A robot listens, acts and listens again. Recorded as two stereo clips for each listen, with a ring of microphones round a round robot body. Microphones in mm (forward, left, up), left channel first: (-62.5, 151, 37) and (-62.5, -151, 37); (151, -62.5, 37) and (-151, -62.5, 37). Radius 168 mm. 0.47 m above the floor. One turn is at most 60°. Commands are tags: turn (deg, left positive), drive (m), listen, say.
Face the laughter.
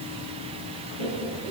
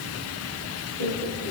<turn deg="-35"/>
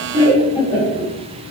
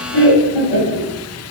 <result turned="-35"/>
<turn deg="10"/>
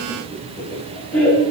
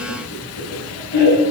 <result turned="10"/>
<say>Facing the laughter.</say>